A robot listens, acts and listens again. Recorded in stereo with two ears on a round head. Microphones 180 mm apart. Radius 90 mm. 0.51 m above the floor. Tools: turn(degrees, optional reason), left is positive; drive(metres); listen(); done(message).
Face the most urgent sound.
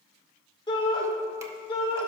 turn(degrees=25, reason="The shout: about 25° left or 155° left.")
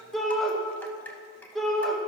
done("Facing the shout, 1 to 2 m away.")